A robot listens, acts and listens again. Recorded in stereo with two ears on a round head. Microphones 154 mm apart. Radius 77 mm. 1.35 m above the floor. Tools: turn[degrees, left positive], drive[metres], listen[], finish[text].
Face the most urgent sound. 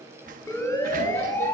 Thought: The siren: about 15° left or 165° left.
Action: turn[15]
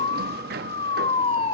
Thought: So it is at 150° left.
Action: turn[150]
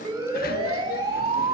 Thought: The siren is now 25° right.
Action: turn[-25]
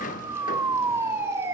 Thought: The siren is now 15° right.
Action: turn[-15]
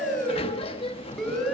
Action: finish[Found it: a siren, straight ahead, over 4 m away.]